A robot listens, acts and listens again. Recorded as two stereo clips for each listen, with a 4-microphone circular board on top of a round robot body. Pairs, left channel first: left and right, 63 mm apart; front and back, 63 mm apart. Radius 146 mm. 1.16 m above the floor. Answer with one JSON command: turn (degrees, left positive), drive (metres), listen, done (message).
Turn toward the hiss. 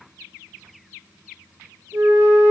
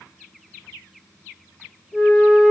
{"listen": true}
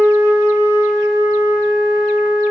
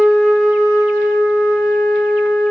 {"listen": true}
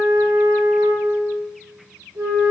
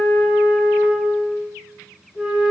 {"done": "I can't make out a hiss to turn to."}